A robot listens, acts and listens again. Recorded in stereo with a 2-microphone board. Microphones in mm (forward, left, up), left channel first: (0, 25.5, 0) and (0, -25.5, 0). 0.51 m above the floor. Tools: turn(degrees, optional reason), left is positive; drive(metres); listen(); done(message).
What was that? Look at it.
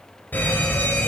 turn(degrees=40, reason="The fire alarm: about 40° left or 140° left.")
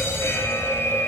turn(degrees=95, reason="So it is at 95° left.")
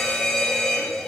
turn(degrees=15, reason="The fire alarm is now 15° left.")
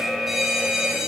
done("Facing the fire alarm.")